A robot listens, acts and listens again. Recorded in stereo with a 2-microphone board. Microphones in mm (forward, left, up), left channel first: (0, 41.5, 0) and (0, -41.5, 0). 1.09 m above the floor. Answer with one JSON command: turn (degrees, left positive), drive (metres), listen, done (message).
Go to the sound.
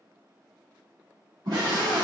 {"turn": -55}
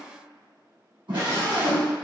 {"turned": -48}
{"turn": -80}
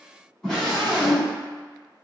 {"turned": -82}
{"drive": 1.0}
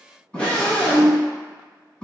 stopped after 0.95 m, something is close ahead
{"turn": 15}
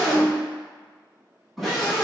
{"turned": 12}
{"done": "I am next to the scream."}